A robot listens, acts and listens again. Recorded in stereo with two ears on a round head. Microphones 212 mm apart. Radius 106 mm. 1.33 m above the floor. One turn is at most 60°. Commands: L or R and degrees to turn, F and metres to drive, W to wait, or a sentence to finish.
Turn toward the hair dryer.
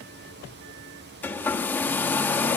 L30
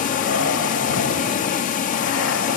L60
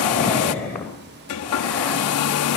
L60
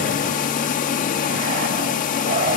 L40
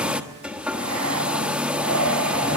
Facing the hair dryer.